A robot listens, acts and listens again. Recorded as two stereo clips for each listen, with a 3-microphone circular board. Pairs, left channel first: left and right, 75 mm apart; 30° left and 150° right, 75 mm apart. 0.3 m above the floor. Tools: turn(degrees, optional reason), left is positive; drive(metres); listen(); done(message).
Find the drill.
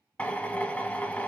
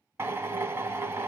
turn(degrees=160, reason="The drill: 160° left.")
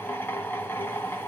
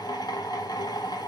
turn(degrees=35, reason="The drill is now 35° left.")
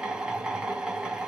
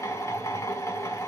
turn(degrees=-10, reason="The drill is now 10° right.")
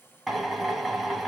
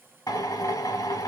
done("Facing the drill.")